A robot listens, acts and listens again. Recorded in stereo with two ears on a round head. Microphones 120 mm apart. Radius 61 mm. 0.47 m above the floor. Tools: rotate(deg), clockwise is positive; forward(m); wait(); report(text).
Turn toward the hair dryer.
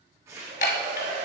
rotate(60)
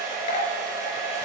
rotate(30)
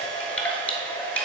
rotate(-15)
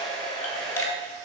report("Facing the hair dryer, 1 to 2 m away.")